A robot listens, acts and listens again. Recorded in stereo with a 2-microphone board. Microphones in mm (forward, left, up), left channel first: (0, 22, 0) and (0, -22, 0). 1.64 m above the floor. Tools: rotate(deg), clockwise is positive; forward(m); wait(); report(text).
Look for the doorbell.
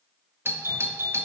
rotate(60)
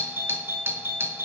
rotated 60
rotate(55)
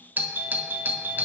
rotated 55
rotate(40)
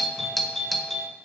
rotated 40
report("Facing the doorbell, under 1 m away.")